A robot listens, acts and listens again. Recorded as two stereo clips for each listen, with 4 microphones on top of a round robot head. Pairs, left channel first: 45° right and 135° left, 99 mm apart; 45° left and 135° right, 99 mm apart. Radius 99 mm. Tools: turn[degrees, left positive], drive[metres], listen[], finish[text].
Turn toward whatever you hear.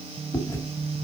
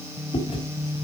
Thought: The chewing: 15° left.
Action: turn[15]
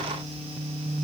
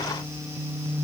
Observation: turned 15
Action: listen[]
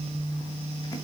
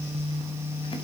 Action: listen[]
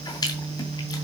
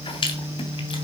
Thought: The chewing is now 10° left.
Action: turn[10]
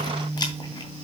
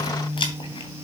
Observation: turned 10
Action: finish[Found it: chewing, straight ahead.]